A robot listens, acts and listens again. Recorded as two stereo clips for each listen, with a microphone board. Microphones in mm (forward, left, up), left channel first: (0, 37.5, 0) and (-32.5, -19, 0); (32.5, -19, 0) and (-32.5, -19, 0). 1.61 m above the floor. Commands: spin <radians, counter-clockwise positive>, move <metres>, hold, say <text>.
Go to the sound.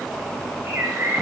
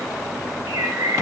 spin -2.97
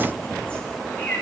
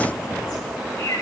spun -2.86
spin -0.17
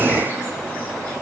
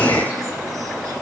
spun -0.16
hold
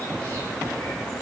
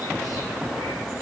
hold
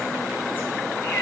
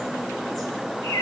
say I heard a bird from this way, but can't make it out now. I did not reach it.